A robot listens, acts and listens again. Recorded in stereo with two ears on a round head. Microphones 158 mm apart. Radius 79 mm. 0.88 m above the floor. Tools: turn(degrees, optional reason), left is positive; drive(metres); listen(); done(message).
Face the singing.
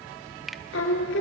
turn(degrees=90)
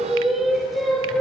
done("Facing the singing.")